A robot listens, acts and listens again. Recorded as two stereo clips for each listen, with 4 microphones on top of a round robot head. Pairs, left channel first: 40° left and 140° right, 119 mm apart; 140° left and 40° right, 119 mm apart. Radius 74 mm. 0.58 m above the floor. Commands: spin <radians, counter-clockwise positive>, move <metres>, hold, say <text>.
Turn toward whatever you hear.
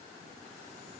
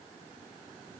hold
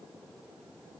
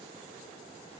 hold
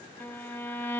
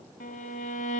spin 2.01
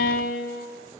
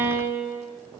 spin 0.61
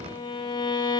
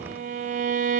spin -0.26
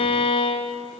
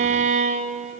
say Found it: a violin, straight ahead.